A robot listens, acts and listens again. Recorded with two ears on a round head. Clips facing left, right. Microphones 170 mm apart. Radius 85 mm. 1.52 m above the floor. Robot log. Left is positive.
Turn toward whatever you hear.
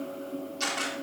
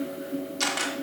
note: The camera shutter: about 60° right or 120° right.
cmd yaw -60
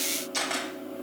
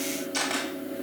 end: Facing the camera shutter, 2 to 4 m away.